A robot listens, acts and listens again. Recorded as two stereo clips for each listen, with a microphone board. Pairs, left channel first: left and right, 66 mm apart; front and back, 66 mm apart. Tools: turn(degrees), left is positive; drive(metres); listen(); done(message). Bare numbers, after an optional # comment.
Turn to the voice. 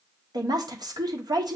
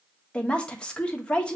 # The woman speaking: 75° right.
turn(-75)
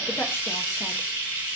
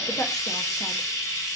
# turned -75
listen()
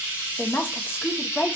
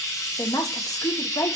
# The woman speaking is now 30° left.
turn(30)
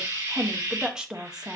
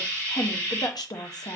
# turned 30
# The woman speaking is now 10° right.
turn(-10)
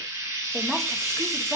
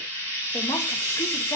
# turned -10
listen()
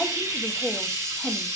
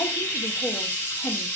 done("Facing the woman speaking, under 1 m away.")